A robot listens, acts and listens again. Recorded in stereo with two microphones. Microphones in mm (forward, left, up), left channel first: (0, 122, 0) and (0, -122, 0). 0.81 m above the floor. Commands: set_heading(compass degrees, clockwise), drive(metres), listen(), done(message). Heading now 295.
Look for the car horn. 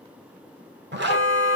set_heading(240)
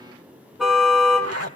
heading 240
done("Found it: a car horn, straight ahead.")